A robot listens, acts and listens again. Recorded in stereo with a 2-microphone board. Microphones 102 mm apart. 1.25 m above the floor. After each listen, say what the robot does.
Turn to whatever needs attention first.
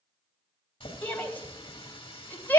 Turn 20° left.
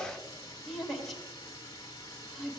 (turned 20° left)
Facing the shout.